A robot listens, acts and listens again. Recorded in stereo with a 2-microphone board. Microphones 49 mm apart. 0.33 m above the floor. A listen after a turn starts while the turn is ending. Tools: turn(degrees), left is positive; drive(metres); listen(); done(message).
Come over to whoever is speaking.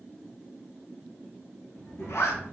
turn(degrees=55)
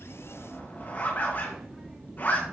drive(metres=1.0)
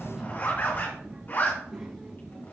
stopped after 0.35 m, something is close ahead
turn(degrees=-10)
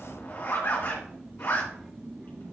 done("Something is in my way. I am facing the child speaking but have not reached it.")